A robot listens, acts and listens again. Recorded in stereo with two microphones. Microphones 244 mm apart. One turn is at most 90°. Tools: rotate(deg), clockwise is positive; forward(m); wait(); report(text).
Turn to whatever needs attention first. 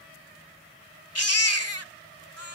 rotate(-90)
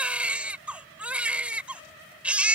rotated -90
report("Found it: a baby crying, straight ahead.")